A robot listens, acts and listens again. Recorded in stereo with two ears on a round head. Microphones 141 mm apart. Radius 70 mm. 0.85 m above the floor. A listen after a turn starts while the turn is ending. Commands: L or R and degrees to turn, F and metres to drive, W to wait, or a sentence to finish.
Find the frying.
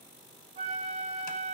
W
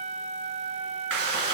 R90
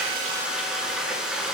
Facing the frying.